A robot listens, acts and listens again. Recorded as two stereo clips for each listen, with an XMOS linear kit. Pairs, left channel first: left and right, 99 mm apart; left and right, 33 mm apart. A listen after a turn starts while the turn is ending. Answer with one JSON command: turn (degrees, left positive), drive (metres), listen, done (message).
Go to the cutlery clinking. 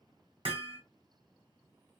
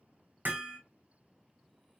{"listen": true}
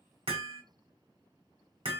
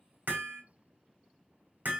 {"listen": true}
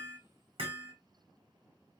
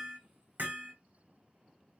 {"done": "I can't make out cutlery clinking, only hammering."}